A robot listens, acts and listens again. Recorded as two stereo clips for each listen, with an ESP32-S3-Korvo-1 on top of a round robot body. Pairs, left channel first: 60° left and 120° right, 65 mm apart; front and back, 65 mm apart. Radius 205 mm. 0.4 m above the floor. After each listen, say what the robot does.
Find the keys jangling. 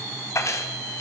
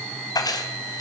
Turn 15° left.
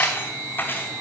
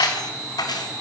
Found it: keys jangling, straight ahead.